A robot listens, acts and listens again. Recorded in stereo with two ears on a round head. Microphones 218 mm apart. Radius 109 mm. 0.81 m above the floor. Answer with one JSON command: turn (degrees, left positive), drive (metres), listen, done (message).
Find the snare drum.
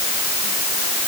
{"listen": true}
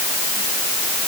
{"listen": true}
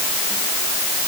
{"done": "I can't make out a snare drum to turn to."}